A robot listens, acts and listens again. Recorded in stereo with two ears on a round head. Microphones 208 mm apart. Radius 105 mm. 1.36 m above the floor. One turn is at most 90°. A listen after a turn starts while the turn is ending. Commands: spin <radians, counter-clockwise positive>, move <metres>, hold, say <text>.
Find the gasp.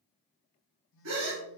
spin -1.05
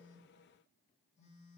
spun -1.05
hold
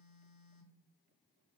say I heard a gasp, but can't make it out now. It was about straight ahead or 60° right.